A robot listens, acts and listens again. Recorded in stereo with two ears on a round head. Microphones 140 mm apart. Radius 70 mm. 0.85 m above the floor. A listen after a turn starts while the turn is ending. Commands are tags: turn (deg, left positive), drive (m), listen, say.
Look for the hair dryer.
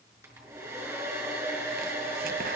<turn deg="-20"/>
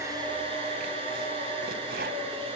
<turn deg="-140"/>
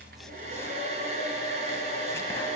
<turn deg="-45"/>
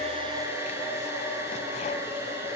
<turn deg="-15"/>
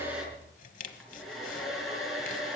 <say>Found it: a hair dryer, straight ahead, over 4 m away.</say>